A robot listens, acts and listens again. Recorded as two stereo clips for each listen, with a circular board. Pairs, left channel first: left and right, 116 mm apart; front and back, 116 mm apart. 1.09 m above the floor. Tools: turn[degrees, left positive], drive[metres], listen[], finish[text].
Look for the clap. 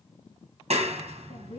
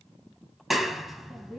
Thought: The clap: 90° right.
Action: turn[-90]
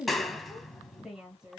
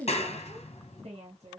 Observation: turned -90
Action: finish[Facing the clap.]